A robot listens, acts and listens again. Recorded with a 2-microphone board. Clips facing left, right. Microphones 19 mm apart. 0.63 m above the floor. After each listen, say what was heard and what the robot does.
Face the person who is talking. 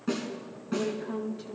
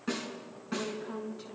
The woman speaking: about 25° left or 155° left. Turn 25° left.
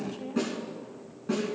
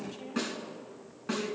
Facing the woman speaking.